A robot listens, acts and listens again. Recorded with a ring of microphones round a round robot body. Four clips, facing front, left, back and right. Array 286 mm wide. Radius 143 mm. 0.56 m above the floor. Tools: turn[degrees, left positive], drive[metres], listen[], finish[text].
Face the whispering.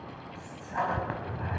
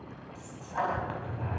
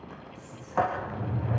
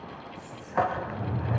Thought: The whispering: 10° left.
Action: turn[10]
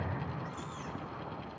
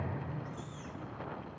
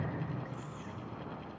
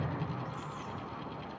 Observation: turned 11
Action: listen[]
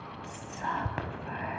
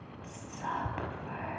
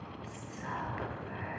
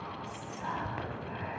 Action: finish[Facing the whispering, over 4 m away.]